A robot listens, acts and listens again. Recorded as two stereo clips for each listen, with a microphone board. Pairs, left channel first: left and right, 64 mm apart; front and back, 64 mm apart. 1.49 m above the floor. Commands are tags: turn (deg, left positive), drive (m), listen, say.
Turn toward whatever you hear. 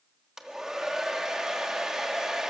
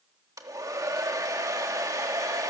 <turn deg="-170"/>
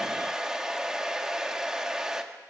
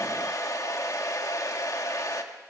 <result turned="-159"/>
<turn deg="-10"/>
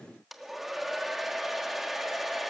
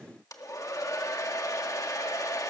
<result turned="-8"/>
<say>Found it: a hair dryer, straight ahead, 1 to 2 m away.</say>